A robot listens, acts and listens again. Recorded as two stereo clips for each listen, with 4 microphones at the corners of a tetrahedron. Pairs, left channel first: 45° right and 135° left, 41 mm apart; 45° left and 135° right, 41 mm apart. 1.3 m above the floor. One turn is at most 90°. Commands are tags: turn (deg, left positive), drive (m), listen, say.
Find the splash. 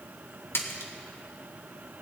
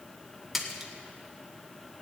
<turn deg="-50"/>
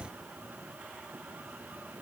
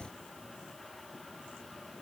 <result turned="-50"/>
<say>I heard a splash from this way, but can't make it out now.</say>